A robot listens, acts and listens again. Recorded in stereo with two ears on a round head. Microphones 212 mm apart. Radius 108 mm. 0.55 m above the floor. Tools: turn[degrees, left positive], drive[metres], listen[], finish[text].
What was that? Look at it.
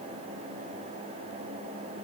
Action: listen[]
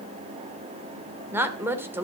Action: turn[-30]
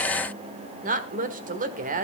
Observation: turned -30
Thought: So it is at 140° right.
Action: turn[-140]
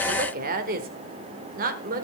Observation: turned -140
Thought: The woman speaking is now 40° right.
Action: turn[-40]
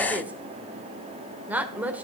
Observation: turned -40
Action: finish[Facing the woman speaking, 1 to 2 m away.]